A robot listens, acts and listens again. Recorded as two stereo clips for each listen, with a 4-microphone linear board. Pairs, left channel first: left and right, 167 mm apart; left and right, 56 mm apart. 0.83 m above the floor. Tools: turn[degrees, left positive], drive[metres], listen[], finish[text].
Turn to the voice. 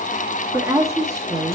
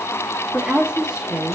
Thought: The woman speaking: about 20° right or 160° right.
Action: turn[-20]
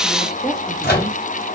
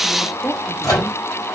Action: finish[Facing the woman speaking, 1 to 2 m away.]